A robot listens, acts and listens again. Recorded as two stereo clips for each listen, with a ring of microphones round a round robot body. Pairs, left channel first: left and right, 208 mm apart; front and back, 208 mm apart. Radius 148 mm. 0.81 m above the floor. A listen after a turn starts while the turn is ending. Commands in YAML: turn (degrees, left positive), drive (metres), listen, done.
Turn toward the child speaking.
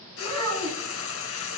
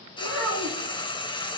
turn: -145
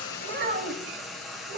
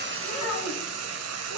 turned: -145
turn: -45
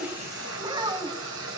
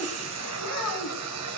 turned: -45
turn: -20
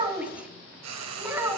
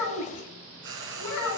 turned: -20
turn: -10
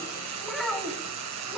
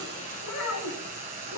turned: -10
done: "Facing the child speaking, over 4 m away."